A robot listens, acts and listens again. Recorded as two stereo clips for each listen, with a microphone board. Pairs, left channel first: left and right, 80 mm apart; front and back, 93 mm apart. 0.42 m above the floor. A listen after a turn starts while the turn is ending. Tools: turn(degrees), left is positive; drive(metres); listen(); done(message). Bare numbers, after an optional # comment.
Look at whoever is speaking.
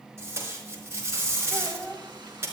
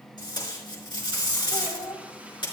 # The child speaking: 10° left.
turn(10)
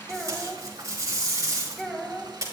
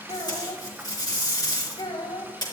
done("Found it: a child speaking, straight ahead, 1 to 2 m away.")